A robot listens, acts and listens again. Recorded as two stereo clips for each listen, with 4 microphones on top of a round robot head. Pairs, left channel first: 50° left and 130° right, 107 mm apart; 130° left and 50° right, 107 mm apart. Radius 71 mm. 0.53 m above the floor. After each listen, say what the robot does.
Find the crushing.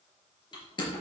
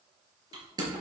Found it: crushing, straight ahead, over 4 m away.